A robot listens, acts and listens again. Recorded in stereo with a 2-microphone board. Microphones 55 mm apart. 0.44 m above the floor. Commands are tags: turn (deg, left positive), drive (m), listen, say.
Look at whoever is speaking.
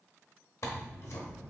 <listen/>
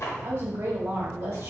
<turn deg="-60"/>
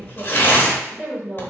<turn deg="-40"/>
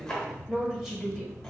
<turn deg="-10"/>
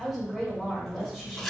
<say>Found it: a woman speaking, straight ahead, 1 to 2 m away.</say>